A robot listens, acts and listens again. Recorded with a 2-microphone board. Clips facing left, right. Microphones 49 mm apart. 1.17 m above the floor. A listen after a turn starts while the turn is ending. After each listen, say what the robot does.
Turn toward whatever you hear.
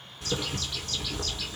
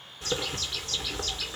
Turn 30° right.
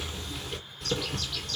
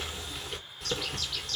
Facing the bird, 2 to 4 m away.